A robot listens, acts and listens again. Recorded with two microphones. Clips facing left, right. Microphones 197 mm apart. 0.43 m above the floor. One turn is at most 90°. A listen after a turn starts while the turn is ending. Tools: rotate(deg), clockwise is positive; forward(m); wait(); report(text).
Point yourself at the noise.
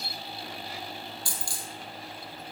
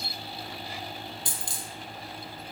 rotate(20)
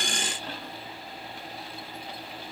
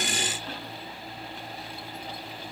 wait()
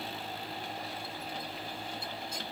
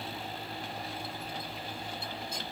report("I heard a dropped coin, but can't make it out now. It was about straight ahead or 140° right.")